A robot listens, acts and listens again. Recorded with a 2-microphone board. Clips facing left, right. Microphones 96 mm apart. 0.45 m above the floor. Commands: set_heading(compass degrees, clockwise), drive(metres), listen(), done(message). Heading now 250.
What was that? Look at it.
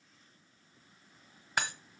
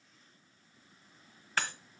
set_heading(235)
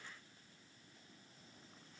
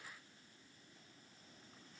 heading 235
listen()
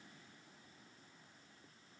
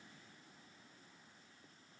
done("I heard breaking glass, but can't make it out now. It was about straight ahead or 150° left.")